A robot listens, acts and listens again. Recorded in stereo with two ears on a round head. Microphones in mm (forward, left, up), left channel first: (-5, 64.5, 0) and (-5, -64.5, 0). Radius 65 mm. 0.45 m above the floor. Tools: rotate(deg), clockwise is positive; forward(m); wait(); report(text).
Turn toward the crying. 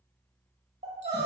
rotate(50)
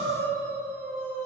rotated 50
rotate(75)
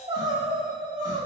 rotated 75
rotate(40)
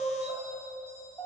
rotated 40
rotate(-15)
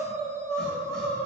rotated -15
report("Found it: crying, straight ahead.")